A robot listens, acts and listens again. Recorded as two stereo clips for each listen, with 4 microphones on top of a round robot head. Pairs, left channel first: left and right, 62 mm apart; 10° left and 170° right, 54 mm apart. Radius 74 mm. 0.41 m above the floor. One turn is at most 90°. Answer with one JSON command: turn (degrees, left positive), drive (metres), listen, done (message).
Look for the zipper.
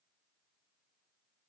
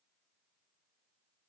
{"listen": true}
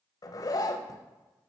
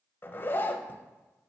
{"turn": 65}
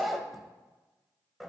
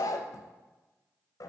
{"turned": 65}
{"done": "Facing the zipper, under 1 m away."}